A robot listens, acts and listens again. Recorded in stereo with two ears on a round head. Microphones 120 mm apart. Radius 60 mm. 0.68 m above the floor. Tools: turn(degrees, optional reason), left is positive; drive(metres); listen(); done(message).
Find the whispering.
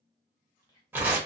turn(degrees=30, reason="The whispering: about 30° left or 150° left.")
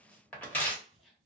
done("Facing the whispering.")